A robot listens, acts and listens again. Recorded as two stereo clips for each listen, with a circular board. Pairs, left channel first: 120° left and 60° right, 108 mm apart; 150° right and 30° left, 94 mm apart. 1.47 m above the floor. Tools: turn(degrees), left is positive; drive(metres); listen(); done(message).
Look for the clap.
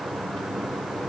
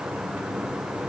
listen()
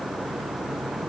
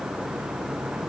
listen()
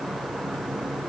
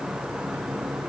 done("I can't make out a clap to turn to.")